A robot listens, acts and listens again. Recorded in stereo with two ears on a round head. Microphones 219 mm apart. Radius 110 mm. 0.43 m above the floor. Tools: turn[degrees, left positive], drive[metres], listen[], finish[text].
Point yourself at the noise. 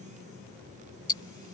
Thought: The ticking: about 20° left or 160° left.
Action: turn[20]
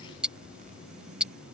Action: finish[Found it: ticking, straight ahead.]